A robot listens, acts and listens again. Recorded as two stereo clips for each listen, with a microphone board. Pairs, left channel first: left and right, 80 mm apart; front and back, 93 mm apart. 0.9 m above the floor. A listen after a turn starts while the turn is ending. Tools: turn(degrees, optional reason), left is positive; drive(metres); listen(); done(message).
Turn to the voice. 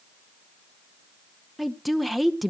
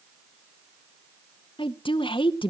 done("Facing the woman speaking, under 1 m away.")